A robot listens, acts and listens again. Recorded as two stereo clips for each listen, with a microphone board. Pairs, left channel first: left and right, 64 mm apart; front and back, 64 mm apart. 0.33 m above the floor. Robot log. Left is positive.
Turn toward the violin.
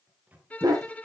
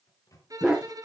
note: The violin: 155° left.
cmd yaw +155
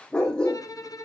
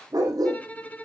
note: The violin is now 65° left.
cmd yaw +65
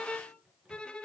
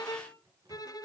note: The violin is now 15° left.
cmd yaw +15
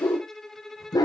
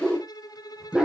end: Facing the violin, 1 to 2 m away.